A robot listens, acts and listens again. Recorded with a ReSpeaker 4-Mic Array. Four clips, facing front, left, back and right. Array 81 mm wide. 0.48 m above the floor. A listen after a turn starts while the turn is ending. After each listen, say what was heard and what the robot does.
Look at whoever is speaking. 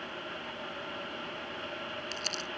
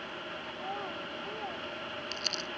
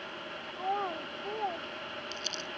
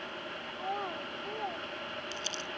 The child speaking: 170° right. Turn 170° right.
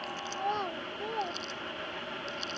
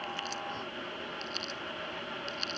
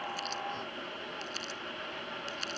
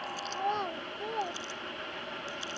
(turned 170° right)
The child speaking is now 45° right. Turn 45° right.
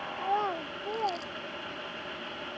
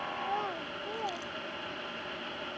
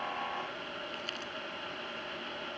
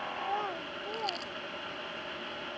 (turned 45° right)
Facing the child speaking.